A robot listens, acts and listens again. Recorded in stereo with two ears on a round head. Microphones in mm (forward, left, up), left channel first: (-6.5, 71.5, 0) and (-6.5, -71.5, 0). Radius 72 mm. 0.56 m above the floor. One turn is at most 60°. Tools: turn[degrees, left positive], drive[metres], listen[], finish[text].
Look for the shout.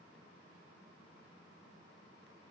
Action: listen[]
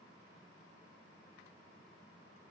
Action: listen[]
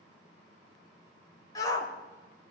Thought: The shout: about 25° left or 155° left.
Action: turn[25]
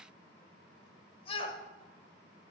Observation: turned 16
Thought: So it is at 145° left.
Action: turn[60]
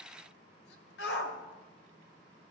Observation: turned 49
Thought: The shout is now 95° left.
Action: turn[60]
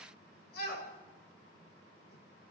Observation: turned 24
Thought: The shout is now 70° left.
Action: turn[60]
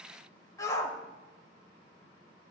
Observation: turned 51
Thought: The shout is now 20° left.
Action: turn[20]
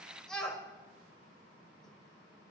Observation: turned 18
Action: finish[Facing the shout.]